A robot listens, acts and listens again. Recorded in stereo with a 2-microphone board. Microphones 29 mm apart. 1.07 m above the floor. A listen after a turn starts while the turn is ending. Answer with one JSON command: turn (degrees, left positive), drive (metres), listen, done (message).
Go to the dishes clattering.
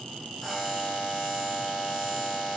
{"listen": true}
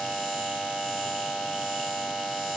{"listen": true}
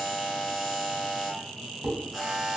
{"turn": -35}
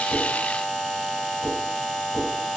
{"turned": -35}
{"turn": -110}
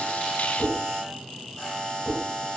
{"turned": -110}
{"drive": 1.0}
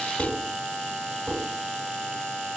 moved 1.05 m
{"drive": 1.0}
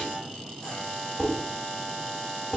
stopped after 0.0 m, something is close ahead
{"turn": 10}
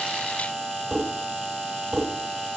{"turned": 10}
{"done": "Arrived at the dishes clattering, straight ahead."}